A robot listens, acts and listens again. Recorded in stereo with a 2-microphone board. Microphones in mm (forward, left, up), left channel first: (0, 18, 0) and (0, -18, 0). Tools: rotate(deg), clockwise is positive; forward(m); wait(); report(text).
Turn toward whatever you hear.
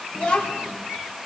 rotate(-25)
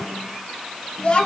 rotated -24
rotate(-30)
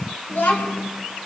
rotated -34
rotate(-125)
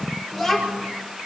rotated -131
rotate(-10)
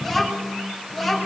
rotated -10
report("Found it: a child speaking, straight ahead.")